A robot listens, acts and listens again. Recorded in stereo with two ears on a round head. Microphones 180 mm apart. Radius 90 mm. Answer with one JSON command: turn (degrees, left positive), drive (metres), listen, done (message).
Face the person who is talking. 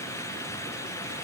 {"listen": true}
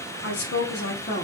{"turn": 40}
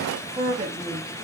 {"turn": -30}
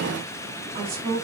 {"turn": -30}
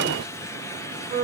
{"turn": -20}
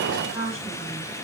{"done": "Found it: a woman speaking, straight ahead."}